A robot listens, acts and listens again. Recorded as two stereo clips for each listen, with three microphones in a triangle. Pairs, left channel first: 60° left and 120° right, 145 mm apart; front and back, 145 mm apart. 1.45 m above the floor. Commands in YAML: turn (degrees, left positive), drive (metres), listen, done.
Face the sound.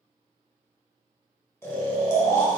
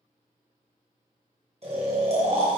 turn: 130
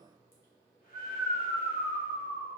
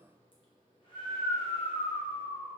turn: 55
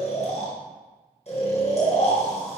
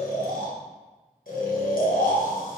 turn: 15
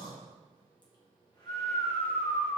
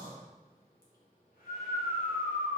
done: "Facing the snoring, 1 to 2 m away."